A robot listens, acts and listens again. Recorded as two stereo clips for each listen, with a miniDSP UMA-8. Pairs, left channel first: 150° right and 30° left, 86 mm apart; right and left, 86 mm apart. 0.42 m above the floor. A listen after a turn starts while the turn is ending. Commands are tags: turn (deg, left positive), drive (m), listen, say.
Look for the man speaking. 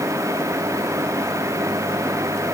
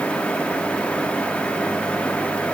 <listen/>
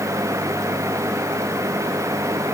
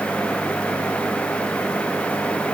<listen/>
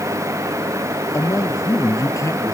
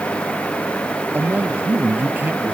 <turn deg="160"/>
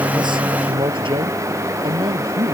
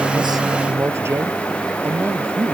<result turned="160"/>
<turn deg="30"/>
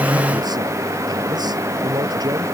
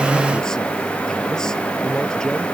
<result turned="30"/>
<say>Facing the man speaking.</say>